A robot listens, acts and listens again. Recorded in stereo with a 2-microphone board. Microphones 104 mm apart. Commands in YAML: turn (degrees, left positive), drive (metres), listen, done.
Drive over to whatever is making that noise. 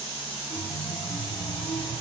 turn: 55
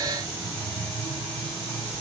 turn: 10
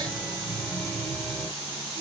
drive: 1.0
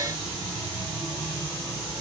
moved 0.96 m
turn: 10
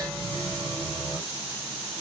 drive: 1.0
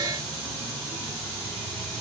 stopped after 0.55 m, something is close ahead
done: "Arrived at the chime, straight ahead."